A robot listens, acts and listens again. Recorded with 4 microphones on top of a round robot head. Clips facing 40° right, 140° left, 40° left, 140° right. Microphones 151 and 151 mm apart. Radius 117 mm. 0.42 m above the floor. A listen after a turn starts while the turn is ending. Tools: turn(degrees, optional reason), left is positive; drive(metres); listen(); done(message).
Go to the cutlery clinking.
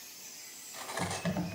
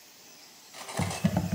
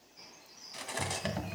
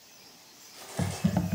turn(degrees=65, reason="The cutlery clinking: 65° left.")
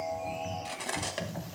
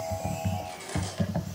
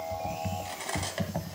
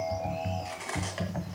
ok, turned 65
turn(degrees=-15, reason="The cutlery clinking is now 15° right.")
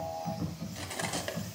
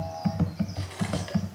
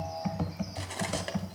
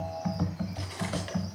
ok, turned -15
listen()
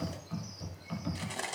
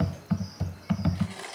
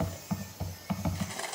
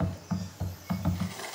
drive(metres=1.0)
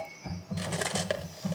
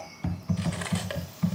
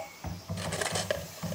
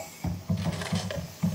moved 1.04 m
drive(metres=1.0)
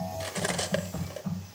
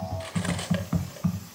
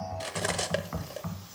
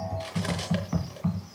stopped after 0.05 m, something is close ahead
done("Arrived at the cutlery clinking, straight ahead.")